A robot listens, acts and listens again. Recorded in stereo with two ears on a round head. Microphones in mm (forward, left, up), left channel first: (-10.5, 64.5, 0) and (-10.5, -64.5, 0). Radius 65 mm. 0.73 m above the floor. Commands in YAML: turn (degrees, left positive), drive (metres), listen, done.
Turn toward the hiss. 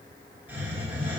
turn: -30
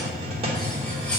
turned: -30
turn: -135
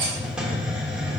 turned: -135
done: "Found it: a hiss, straight ahead, 1 to 2 m away."